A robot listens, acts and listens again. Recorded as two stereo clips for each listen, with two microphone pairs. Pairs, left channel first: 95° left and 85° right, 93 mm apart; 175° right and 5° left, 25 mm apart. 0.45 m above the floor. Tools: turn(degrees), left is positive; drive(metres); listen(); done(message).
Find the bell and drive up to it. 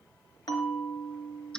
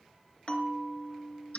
turn(degrees=140)
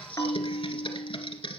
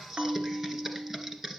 turn(degrees=40)
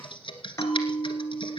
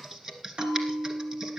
turn(degrees=35)
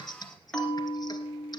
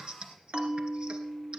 turn(degrees=15)
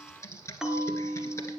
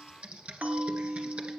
drive(metres=1.0)
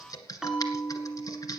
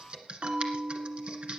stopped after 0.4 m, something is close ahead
done("Blocked. The bell is further on, straight ahead.")